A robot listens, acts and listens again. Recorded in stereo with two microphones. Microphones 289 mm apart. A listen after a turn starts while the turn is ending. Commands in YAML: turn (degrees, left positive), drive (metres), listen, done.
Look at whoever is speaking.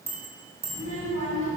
turn: 50
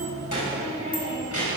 turn: 80
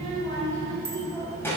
done: "Facing the child speaking."